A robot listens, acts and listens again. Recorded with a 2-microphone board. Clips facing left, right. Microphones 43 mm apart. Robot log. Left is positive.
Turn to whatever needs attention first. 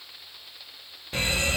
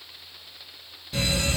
note: The fire alarm: about 40° left or 140° left.
cmd yaw +40
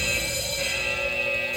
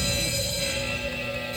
note: So it is at 95° left.
cmd yaw +95
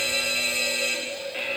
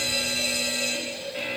note: The fire alarm is now 35° left.
cmd yaw +35
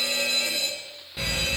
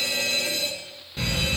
end: Facing the fire alarm, 2 to 4 m away.